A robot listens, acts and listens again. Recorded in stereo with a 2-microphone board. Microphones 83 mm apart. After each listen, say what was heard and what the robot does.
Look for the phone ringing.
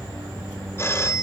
The phone ringing: about 35° left or 145° left. Turn 35° left.
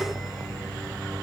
Keep listening.
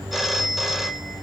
Found it: a phone ringing, straight ahead, 1 to 2 m away.